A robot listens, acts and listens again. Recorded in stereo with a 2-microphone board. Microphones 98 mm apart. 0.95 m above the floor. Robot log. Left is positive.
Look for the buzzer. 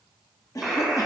cmd yaw -30
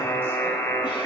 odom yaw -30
note: So it is at 30° left.
cmd yaw +30
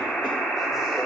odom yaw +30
note: The buzzer is now 10° left.
cmd yaw +10
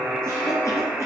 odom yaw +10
end: Found it: a buzzer, straight ahead, 1 to 2 m away.